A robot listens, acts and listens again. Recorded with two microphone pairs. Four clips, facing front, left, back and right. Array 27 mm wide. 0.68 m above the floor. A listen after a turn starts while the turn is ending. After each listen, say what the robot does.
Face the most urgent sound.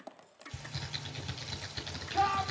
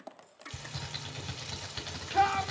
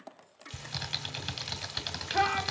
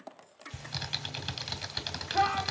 Turn 170° left.
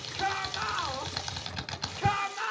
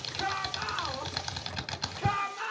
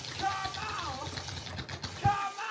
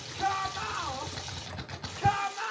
Facing the shout, 2 to 4 m away.